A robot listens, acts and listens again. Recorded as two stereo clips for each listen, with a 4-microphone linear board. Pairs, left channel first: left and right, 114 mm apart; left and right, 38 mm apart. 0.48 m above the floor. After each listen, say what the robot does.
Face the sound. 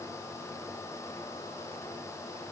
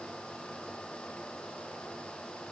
Keep listening.
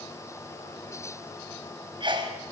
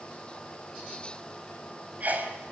Turn 45° right.
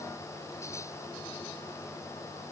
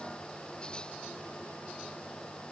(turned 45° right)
Keep listening.
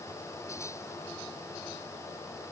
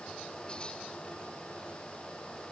I heard a sneeze, but can't make it out now. It was about straight ahead or 90° right.